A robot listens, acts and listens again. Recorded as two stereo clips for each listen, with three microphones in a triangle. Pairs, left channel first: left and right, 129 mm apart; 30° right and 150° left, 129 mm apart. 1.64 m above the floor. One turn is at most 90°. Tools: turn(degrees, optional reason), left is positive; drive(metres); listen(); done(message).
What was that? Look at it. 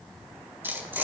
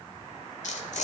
turn(degrees=-15, reason="The tearing paper: 15° right.")
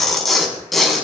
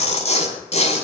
done("Facing the tearing paper, over 4 m away.")